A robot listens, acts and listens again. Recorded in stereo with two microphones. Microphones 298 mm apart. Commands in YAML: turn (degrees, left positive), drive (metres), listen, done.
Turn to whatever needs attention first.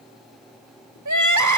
turn: -90
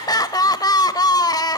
turn: 15
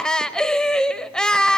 done: "Facing the crying."